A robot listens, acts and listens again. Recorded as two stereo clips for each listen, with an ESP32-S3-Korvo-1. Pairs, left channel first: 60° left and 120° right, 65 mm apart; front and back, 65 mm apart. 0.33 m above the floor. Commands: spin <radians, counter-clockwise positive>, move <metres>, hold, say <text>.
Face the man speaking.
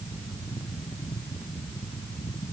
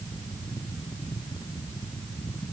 hold
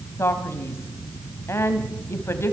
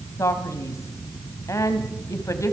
spin 0.35
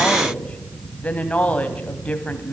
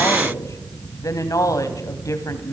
say Found it: a man speaking, straight ahead.